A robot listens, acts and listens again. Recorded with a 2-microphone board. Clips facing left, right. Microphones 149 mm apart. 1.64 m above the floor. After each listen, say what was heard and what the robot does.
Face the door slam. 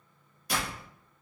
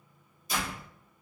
The door slam: about 70° left or 110° left. Turn 70° left.
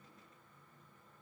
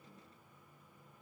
Keep listening.
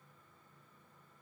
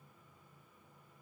I heard a door slam, but can't make it out now. It was about straight ahead or 40° left.